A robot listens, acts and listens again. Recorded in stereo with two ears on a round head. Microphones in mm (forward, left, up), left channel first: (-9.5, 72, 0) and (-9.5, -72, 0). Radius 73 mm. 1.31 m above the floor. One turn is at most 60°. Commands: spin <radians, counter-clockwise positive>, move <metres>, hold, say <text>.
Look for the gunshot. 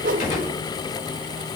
spin 0.87
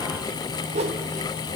hold
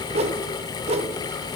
say I heard a gunshot, but can't make it out now. It was about straight ahead or 80° left.